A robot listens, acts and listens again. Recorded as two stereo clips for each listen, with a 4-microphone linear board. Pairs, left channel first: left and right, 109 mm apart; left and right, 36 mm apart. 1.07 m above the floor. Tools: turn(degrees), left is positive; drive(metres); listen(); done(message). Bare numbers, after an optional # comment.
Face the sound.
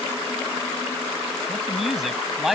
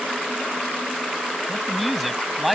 turn(30)
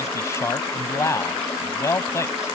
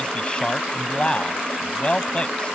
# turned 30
# So it is at 155° left.
turn(155)
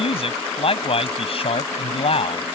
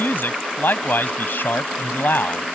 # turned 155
# The man speaking is now 60° left.
turn(60)
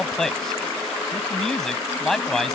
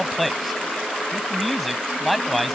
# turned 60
done("Facing the man speaking.")